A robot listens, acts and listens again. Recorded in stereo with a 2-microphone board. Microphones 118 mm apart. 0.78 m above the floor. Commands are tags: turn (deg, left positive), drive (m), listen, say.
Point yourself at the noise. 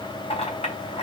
<turn deg="60"/>
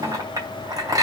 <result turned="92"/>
<turn deg="-30"/>
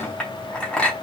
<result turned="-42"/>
<turn deg="10"/>
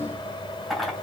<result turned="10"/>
<say>Facing the clink, 2 to 4 m away.</say>